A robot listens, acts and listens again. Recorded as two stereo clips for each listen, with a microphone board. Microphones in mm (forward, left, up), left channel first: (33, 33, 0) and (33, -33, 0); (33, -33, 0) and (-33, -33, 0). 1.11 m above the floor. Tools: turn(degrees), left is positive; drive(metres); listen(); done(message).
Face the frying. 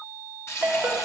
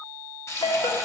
turn(degrees=45)
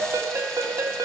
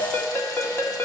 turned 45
listen()
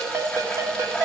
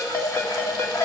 listen()
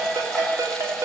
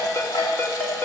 done("Facing where the frying came from. I can't hear it now.")